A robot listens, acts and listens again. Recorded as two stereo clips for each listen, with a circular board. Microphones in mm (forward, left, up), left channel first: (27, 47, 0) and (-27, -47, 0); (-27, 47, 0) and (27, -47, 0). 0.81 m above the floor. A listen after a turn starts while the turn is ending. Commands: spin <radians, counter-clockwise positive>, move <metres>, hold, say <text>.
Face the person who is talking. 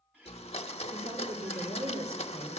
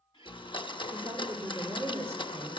spin -2.27
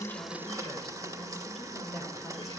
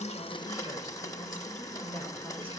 spin -0.52
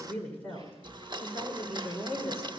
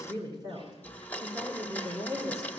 spin -0.26
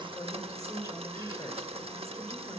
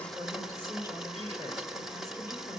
say Facing the woman speaking.